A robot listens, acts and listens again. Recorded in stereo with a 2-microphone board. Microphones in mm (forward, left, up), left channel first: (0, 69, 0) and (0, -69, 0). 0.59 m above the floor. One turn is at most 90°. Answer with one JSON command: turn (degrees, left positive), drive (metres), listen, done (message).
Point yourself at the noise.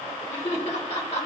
{"turn": 55}
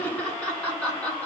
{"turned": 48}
{"turn": 10}
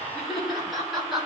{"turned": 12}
{"done": "Facing the laughter."}